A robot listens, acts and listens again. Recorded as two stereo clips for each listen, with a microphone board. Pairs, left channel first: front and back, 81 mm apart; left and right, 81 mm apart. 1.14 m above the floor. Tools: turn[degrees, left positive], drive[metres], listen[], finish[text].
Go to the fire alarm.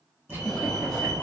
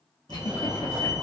Thought: The fire alarm: 80° right.
Action: turn[-80]
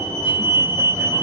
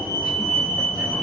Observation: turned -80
Action: drive[1.0]
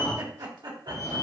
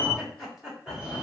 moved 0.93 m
Thought: The fire alarm is now 20° right.
Action: turn[-20]
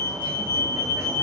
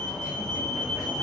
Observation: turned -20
Action: drive[1.0]
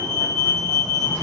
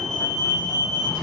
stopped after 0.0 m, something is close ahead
Action: finish[Arrived at the fire alarm, straight ahead.]